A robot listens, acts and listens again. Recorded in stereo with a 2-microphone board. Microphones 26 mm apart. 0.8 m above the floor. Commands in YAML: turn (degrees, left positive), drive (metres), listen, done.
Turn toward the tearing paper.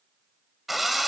listen: true
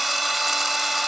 listen: true
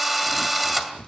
turn: 70
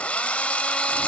listen: true
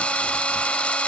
listen: true
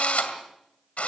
done: "I heard tearing paper, but can't make it out now. It was about straight ahead or 40° left."